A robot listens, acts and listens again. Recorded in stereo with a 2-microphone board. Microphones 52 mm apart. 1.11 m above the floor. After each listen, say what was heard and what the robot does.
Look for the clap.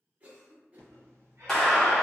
Turn 30° left.
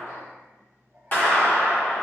So it is at 140° left. Turn 140° left.
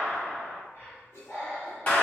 The clap is now 30° left. Turn 30° left.
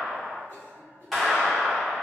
Found it: a clap, straight ahead.